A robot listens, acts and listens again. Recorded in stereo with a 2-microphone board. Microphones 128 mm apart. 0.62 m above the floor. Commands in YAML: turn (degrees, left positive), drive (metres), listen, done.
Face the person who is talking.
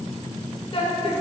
turn: 50
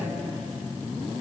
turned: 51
listen: true
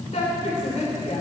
turn: 75
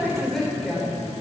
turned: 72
done: "Facing the woman speaking, 2 to 4 m away."